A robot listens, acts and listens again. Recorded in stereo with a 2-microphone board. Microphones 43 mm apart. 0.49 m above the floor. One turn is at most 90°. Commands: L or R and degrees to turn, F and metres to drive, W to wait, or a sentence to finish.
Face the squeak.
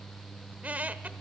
R35
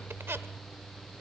R90
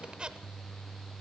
R25
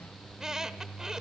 R15
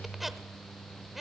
Found it: a squeak, straight ahead.